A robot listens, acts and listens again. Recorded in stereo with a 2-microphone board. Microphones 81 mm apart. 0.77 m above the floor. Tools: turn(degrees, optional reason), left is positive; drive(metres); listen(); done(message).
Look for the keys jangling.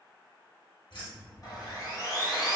turn(degrees=90)
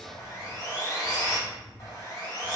done("Facing the keys jangling, 1 to 2 m away.")